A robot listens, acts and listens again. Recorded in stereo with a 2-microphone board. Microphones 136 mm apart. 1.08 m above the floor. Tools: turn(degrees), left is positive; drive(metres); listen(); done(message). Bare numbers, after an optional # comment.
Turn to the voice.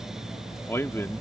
# The man speaking: about 20° left or 160° left.
turn(20)
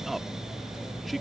listen()
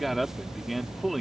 done("Found it: a man speaking, straight ahead.")